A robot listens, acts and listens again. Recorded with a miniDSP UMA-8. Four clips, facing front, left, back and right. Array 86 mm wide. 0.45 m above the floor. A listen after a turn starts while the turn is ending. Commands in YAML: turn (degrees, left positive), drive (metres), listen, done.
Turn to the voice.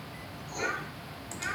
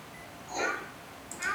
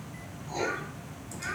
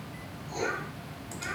turn: 80
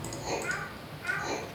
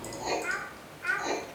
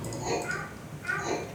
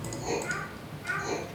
turn: 85
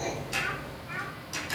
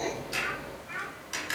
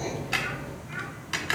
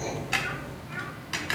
turn: 25
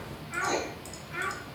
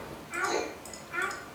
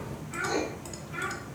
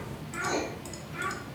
turn: 50
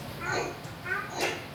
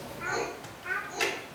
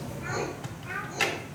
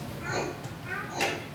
turn: 20
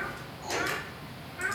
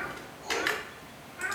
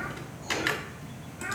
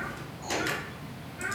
done: "Facing the child speaking."